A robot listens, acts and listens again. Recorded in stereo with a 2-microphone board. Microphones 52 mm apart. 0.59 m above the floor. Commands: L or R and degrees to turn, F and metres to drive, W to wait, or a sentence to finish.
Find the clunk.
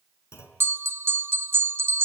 L65
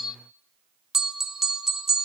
W
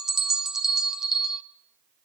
I heard a clunk, but can't make it out now. It was about straight ahead or 50° left.